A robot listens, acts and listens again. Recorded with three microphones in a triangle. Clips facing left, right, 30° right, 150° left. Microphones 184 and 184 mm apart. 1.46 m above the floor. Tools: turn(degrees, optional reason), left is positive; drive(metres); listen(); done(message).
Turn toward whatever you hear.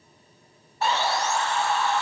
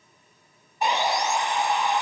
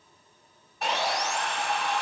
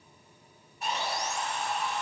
turn(degrees=-15, reason="The sawing: 15° right.")
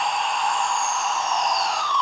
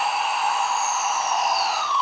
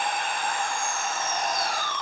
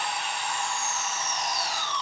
done("Facing the sawing, 1 to 2 m away.")